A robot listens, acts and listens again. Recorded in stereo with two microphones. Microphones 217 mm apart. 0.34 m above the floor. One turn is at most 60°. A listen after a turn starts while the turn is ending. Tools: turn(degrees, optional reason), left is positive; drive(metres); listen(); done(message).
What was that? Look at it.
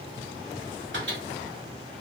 turn(degrees=-60, reason="The microwave: about 60° right or 120° right.")
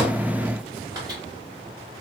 listen()
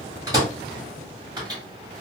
turn(degrees=-20, reason="So it is at 20° right.")
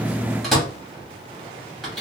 done("Found it: a microwave, straight ahead, 1 to 2 m away.")